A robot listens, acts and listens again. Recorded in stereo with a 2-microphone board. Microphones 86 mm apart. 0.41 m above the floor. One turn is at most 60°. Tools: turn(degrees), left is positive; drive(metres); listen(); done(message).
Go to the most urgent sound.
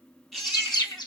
turn(degrees=30)
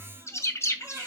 turn(degrees=-30)
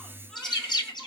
listen()
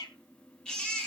turn(degrees=10)
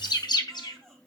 listen()
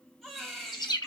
drive(metres=1.0)
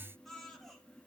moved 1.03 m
drive(metres=1.0)
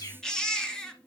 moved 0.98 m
turn(degrees=10)
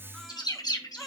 drive(metres=1.0)
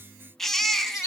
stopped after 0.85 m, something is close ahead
done("Arrived at the baby crying, straight ahead.")